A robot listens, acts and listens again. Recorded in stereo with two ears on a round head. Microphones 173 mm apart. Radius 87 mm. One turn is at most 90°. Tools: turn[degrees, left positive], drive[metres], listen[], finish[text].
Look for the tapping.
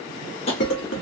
Thought: The tapping: about 30° left or 150° left.
Action: turn[30]
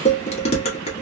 Action: listen[]
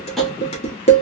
Action: listen[]
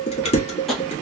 Action: finish[Facing the tapping, 1 to 2 m away.]